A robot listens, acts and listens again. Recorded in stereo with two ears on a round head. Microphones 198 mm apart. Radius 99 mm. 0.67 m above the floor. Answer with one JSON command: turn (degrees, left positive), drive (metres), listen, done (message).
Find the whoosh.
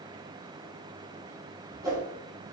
{"turn": -15}
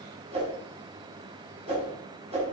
{"turn": -150}
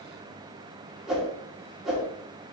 {"done": "Facing the whoosh."}